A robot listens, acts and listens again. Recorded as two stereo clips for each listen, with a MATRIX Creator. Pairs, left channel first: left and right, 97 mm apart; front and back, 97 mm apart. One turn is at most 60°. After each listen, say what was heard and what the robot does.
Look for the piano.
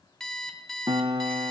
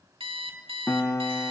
The piano: 55° right. Turn 55° right.
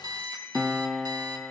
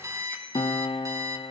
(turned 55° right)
Facing the piano, under 1 m away.